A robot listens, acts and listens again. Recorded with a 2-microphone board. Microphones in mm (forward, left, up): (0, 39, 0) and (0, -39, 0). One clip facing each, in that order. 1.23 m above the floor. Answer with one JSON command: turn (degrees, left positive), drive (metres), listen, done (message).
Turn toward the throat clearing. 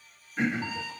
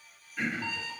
{"turn": 25}
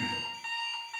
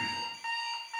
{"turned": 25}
{"listen": true}
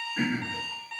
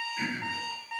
{"turn": 130}
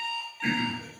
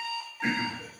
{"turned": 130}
{"turn": -25}
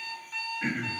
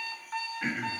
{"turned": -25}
{"done": "Found it: throat clearing, straight ahead, 1 to 2 m away."}